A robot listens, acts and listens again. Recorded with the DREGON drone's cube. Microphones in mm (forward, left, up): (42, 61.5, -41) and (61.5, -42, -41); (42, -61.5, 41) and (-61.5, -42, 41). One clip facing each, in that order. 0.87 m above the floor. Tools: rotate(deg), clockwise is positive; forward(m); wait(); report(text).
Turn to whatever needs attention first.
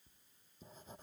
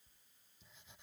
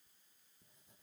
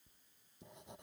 wait()
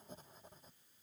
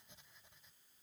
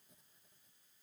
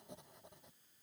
wait()
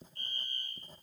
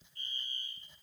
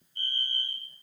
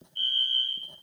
rotate(-60)
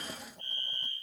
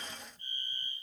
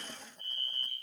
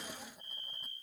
rotate(10)
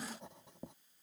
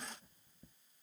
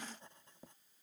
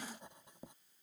wait()
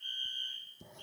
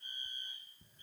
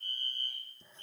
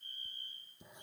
report("Facing the fire alarm.")